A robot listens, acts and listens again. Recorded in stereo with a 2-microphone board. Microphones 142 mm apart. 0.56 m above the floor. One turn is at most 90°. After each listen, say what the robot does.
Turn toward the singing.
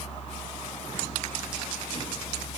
Keep listening.
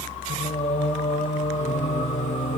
Turn 65° left.
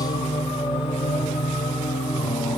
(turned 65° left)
Turn 30° left.
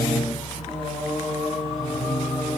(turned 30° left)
Facing the singing.